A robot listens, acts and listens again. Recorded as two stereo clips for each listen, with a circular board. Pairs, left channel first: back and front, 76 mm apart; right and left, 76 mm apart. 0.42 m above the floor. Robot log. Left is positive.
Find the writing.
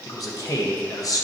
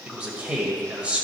cmd idle
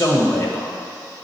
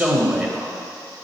cmd idle
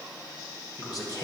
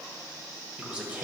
end: I can't make out writing to turn to.